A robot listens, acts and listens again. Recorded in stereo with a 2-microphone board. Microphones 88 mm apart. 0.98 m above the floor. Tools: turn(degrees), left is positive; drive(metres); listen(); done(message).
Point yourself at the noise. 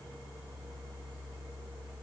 listen()
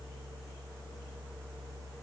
listen()
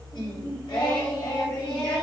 turn(degrees=65)
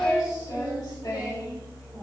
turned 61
turn(degrees=55)
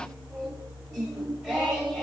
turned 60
done("Facing the singing, 1 to 2 m away.")